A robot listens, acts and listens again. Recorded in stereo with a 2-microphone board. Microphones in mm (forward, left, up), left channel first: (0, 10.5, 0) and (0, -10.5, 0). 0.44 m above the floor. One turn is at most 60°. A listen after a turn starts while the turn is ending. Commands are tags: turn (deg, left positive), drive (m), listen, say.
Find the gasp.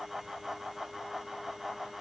<listen/>
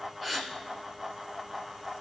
<turn deg="30"/>
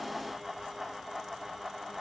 <listen/>
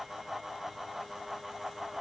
<say>I heard a gasp, but can't make it out now. It was about 25° right or 145° left.</say>